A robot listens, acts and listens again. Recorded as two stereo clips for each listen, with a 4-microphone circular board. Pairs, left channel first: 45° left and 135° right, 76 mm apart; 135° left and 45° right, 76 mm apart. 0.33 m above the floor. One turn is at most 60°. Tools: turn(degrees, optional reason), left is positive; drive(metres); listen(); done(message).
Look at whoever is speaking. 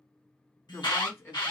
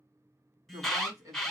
turn(degrees=-15, reason="The woman speaking: 15° right.")
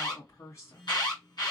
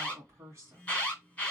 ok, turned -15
done("Facing the woman speaking, 2 to 4 m away.")